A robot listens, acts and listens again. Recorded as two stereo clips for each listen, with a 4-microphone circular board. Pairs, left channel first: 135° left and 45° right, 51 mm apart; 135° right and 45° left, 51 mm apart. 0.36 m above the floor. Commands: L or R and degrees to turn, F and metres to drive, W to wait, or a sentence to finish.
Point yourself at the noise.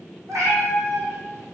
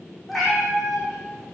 R50
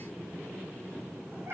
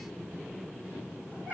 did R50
R10
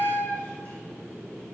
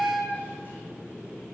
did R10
R10
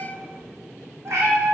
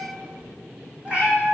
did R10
R20
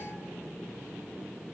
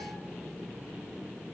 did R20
W
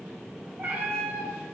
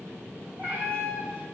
Found it: a cat meowing, straight ahead, 2 to 4 m away.